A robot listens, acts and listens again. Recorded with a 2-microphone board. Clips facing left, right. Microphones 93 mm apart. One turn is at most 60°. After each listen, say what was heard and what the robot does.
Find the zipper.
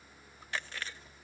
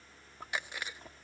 The zipper: about 55° right or 125° right. Turn 55° right.
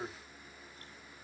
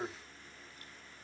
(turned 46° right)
So it is at 10° right. Turn 10° right.
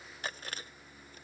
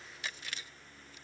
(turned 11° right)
Keep listening.
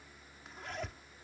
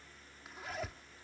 Facing the zipper.